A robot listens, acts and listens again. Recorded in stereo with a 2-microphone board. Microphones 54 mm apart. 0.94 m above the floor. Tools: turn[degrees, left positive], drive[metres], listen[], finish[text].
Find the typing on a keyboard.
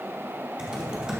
Thought: The typing on a keyboard: about 15° right or 165° right.
Action: turn[-15]
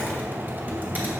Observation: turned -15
Thought: So it is at 150° right.
Action: turn[-150]
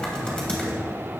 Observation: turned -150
Thought: The typing on a keyboard is now 20° left.
Action: turn[20]
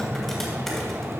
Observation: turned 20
Action: finish[Found it: typing on a keyboard, straight ahead, 2 to 4 m away.]